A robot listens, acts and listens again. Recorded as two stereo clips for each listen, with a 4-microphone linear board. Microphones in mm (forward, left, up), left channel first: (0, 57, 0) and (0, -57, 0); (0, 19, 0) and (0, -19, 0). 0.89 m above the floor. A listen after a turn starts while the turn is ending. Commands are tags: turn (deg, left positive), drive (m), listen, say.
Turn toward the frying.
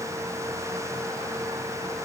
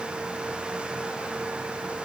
<listen/>
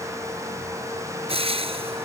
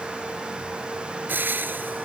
<turn deg="-55"/>
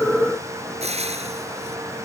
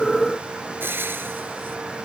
<turn deg="-70"/>
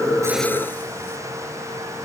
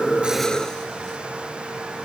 <listen/>
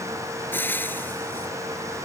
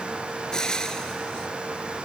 <turn deg="20"/>
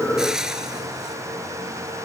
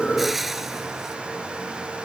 <say>Found it: frying, straight ahead.</say>